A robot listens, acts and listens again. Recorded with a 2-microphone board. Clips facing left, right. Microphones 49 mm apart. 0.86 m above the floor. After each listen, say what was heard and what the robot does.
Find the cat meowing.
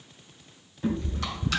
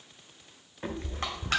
The cat meowing: about 45° right or 135° right. Turn 45° right.
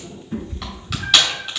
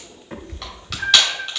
So it is at 85° right. Turn 85° right.
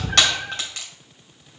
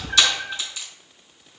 The cat meowing is now 20° left. Turn 20° left.
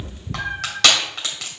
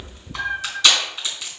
Found it: a cat meowing, straight ahead, 1 to 2 m away.